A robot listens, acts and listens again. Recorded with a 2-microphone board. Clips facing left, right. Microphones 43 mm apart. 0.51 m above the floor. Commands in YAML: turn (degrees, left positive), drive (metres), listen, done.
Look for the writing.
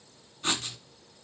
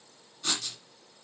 turn: 30
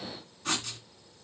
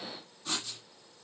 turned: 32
turn: 120
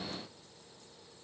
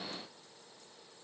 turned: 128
turn: -10
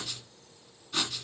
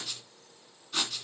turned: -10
done: "Facing the writing."